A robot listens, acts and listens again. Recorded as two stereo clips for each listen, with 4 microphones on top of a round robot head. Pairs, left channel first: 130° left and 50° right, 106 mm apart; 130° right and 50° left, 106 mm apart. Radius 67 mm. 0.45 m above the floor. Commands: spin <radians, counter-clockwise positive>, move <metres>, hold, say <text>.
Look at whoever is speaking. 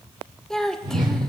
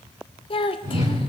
spin -2.53
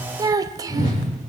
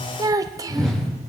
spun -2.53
say Found it: a child speaking, straight ahead.